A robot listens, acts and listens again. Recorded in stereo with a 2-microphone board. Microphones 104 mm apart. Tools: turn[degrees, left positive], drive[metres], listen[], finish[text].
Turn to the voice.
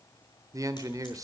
Thought: The man speaking: about 35° right or 145° right.
Action: turn[-35]
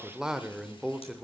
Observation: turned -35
Thought: So it is at 10° right.
Action: turn[-10]
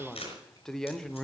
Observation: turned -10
Action: finish[Found it: a man speaking, straight ahead.]